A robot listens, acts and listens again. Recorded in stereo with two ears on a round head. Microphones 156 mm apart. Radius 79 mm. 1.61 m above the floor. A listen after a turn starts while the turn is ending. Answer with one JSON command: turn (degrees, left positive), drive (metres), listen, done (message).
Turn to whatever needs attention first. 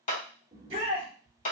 {"turn": -30}
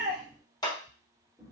{"listen": true}
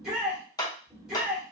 {"done": "Found it: a shout, straight ahead."}